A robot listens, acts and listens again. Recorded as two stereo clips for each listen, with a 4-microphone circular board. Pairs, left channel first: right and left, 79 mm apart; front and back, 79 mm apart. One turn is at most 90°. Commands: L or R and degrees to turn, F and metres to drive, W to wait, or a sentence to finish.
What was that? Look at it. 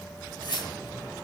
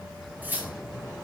R90
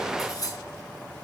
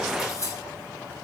R50
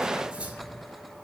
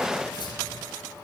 W
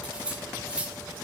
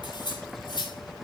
L15
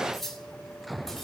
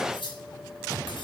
Facing the cutlery clinking.